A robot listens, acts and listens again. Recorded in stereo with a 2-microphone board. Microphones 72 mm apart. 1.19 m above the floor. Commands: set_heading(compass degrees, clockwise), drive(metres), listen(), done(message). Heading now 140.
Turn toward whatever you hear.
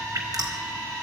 set_heading(195)
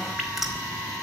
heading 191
done("Found it: dripping, straight ahead.")